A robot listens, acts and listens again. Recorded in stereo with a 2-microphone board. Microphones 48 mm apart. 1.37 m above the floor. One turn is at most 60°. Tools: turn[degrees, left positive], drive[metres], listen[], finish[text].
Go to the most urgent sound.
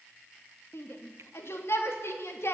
Thought: The shout: about 60° left or 120° left.
Action: turn[60]
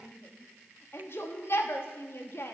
Thought: So it is at 60° left.
Action: turn[60]
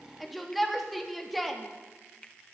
Action: drive[1.0]
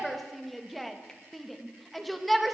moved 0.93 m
Action: drive[1.0]
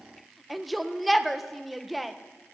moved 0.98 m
Action: drive[1.0]
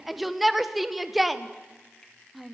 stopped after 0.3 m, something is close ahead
Action: finish[I am next to the shout.]